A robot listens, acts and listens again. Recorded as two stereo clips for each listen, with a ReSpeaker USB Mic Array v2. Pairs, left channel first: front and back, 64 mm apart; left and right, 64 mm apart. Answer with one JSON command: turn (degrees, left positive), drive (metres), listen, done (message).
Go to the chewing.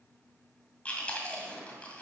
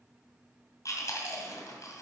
{"turn": 70}
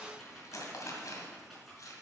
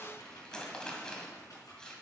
{"turn": 15}
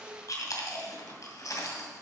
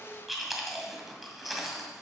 {"drive": 1.0}
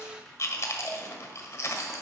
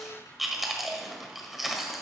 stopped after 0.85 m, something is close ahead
{"done": "Arrived at the chewing, straight ahead."}